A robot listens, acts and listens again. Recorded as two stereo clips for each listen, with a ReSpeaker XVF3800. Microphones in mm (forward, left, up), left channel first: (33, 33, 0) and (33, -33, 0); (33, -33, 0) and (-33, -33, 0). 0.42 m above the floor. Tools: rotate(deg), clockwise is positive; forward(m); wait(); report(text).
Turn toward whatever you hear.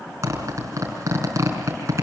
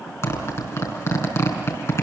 rotate(45)
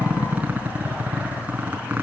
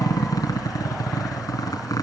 rotate(20)
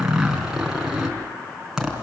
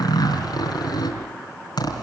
report("Facing the zipper.")